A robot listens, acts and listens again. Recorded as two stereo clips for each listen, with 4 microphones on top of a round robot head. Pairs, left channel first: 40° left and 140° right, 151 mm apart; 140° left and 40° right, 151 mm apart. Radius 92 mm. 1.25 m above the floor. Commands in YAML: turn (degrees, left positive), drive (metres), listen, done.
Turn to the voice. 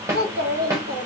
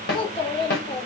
turn: -160
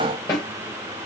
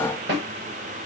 listen: true
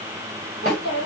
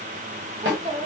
turn: 20
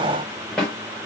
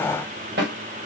listen: true
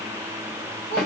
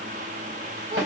listen: true
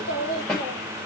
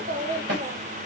done: "Found it: a child speaking, straight ahead."